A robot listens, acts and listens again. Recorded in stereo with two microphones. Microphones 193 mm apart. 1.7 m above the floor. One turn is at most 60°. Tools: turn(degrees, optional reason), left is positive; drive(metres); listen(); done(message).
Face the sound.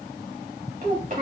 turn(degrees=-50, reason="The child speaking: about 50° right or 130° right.")
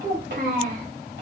turn(degrees=-60, reason="So it is at 75° right.")
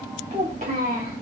turn(degrees=-50, reason="The child speaking is now 50° right.")
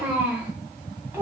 turn(degrees=-15, reason="The child speaking is now 15° right.")
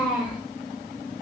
done("Found it: a child speaking, straight ahead.")